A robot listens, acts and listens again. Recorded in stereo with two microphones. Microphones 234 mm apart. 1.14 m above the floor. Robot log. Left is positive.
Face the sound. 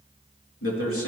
note: The man speaking: about 70° left or 110° left.
cmd yaw +70
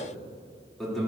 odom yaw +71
end: Facing the man speaking, 2 to 4 m away.